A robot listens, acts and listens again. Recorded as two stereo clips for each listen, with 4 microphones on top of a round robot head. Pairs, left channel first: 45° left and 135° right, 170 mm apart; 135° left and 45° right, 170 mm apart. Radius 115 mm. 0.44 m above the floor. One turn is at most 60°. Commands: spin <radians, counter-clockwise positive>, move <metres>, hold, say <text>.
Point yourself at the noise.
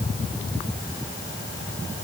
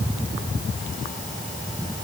hold
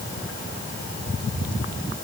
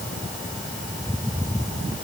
hold
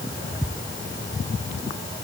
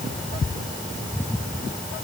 say I can't make out anything to turn to.